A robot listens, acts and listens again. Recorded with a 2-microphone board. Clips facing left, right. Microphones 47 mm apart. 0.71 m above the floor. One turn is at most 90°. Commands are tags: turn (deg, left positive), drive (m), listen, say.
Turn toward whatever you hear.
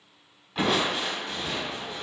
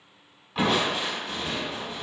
<turn deg="30"/>
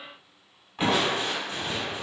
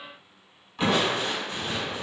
<turn deg="90"/>
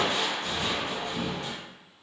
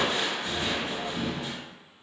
<turn deg="55"/>
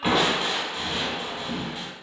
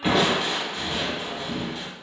<say>Found it: crushing, straight ahead, 1 to 2 m away.</say>